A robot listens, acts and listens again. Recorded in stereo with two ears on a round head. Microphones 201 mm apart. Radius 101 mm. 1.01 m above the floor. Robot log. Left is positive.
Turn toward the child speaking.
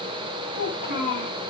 note: The child speaking: about 40° left or 140° left.
cmd yaw +40
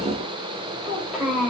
end: Facing the child speaking, 2 to 4 m away.